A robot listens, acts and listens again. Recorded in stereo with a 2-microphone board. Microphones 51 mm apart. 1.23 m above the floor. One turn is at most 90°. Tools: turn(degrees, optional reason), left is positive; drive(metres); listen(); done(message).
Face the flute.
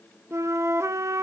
turn(degrees=-65, reason="The flute: about 65° right or 115° right.")
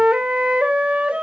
turn(degrees=-25, reason="So it is at 25° right.")
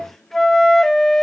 done("Found it: a flute, straight ahead, under 1 m away.")